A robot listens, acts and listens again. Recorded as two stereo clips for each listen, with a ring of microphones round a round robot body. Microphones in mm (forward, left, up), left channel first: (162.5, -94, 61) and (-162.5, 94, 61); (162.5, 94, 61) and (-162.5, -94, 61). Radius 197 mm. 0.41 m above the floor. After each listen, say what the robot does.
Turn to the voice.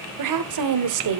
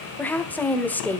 Turn 115° left.
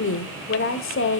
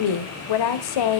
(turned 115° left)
Turn 25° left.
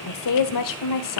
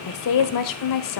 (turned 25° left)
Found it: a woman speaking, straight ahead.